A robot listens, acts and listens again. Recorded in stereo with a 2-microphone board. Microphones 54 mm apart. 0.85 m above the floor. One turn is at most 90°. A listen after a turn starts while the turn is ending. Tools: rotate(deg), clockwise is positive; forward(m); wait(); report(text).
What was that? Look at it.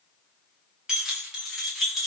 rotate(30)
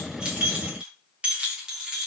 rotate(30)
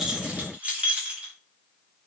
rotate(15)
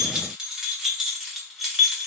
rotate(30)
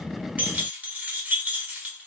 rotate(90)
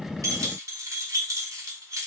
rotate(85)
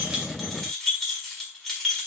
rotate(-10)
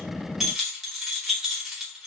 report("Found it: keys jangling, straight ahead, 1 to 2 m away.")